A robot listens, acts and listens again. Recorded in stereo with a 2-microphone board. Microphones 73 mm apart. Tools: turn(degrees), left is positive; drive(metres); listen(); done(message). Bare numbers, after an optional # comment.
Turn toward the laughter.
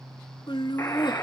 turn(90)
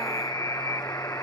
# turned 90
listen()
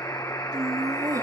# The laughter is now 50° right.
turn(-50)
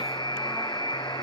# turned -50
listen()
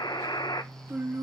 # The laughter is now 25° right.
turn(-25)
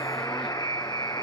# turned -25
listen()
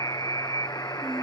listen()
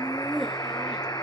done("Found it: laughter, straight ahead, 2 to 4 m away.")